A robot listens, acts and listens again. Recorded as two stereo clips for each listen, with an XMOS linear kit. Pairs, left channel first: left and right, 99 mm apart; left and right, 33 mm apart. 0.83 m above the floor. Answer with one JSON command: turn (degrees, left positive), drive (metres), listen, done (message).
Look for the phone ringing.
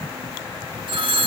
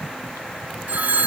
{"turn": -55}
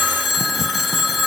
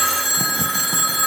{"done": "Found it: a phone ringing, straight ahead, 1 to 2 m away."}